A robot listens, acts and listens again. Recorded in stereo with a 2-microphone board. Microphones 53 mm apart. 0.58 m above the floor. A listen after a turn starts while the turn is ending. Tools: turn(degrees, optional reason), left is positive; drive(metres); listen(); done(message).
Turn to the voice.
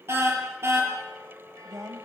turn(degrees=-55, reason="The woman speaking: about 55° right or 125° right.")
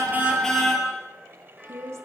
turn(degrees=-65, reason="So it is at 65° right.")
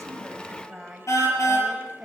turn(degrees=-10, reason="The woman speaking is now 10° right.")
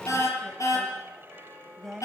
done("Found it: a woman speaking, straight ahead, 2 to 4 m away.")